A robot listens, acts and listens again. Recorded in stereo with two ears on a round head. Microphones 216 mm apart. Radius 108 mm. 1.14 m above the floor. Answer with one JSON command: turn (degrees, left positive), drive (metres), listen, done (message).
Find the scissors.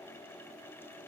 {"listen": true}
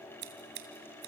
{"turn": -45}
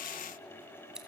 {"done": "Found it: scissors, straight ahead."}